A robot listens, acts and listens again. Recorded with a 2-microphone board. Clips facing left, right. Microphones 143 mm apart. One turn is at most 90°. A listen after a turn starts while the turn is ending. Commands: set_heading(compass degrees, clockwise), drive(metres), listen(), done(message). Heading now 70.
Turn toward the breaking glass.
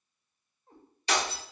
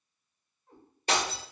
set_heading(120)
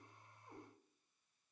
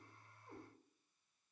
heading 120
listen()
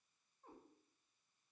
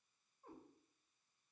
done("I heard breaking glass, but can't make it out now. It was about straight ahead or 80° right.")